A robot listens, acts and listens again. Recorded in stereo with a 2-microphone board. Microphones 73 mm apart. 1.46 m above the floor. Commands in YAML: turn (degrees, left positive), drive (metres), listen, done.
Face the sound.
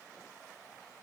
listen: true
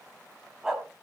turn: -30
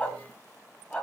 turn: 15
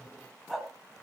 done: "Facing the dog barking."